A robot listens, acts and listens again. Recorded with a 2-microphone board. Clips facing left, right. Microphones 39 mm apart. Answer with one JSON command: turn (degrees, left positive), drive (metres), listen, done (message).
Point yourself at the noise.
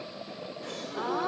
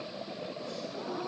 {"turn": 55}
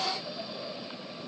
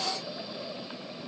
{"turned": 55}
{"listen": true}
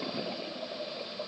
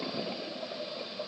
{"done": "I heard a gasp, but can't make it out now. It was about straight ahead or 70° left."}